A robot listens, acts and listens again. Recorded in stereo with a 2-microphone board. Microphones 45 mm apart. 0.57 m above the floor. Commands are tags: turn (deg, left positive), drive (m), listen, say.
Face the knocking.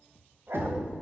<turn deg="-55"/>
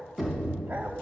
<say>Facing the knocking, 2 to 4 m away.</say>